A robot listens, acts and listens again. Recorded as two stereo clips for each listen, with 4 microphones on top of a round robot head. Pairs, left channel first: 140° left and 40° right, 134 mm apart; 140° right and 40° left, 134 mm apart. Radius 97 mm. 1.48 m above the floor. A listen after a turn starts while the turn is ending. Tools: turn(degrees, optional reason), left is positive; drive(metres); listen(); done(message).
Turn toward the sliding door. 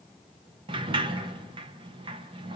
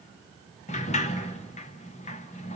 turn(degrees=-95, reason="The sliding door: 95° right.")
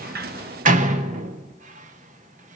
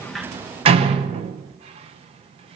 done("Found it: a sliding door, straight ahead, 1 to 2 m away.")